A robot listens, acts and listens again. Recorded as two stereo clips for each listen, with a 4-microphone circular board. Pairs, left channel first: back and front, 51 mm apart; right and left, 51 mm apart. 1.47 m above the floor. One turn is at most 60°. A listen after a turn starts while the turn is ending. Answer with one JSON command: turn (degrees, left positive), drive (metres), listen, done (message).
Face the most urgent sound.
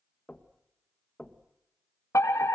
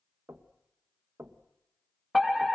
{"turn": 60}
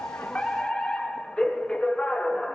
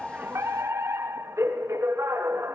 {"turn": 60}
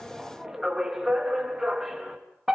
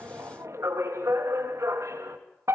{"turn": 60}
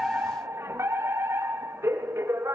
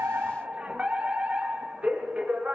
{"turn": 25}
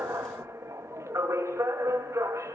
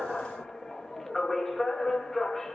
{"done": "Found it: a fire alarm, straight ahead, 2 to 4 m away."}